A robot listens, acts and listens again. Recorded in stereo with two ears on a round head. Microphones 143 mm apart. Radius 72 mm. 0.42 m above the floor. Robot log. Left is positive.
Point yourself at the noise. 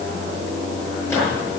cmd yaw +30
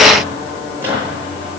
note: So it is at 15° right.
cmd yaw -15
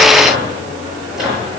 end: Found it: a microwave, straight ahead.